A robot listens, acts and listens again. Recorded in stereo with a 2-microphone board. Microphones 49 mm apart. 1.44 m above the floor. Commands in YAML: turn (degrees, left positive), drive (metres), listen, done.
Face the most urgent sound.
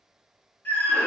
turn: 45
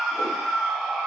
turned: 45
done: "Facing the scream."